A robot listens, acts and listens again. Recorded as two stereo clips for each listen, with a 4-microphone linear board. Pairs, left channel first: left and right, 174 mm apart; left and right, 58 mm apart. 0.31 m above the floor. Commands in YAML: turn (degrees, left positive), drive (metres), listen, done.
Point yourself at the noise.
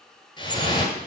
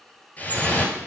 turn: 25
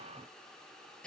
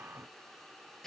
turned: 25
listen: true
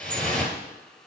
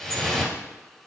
done: "Facing the dripping, 1 to 2 m away."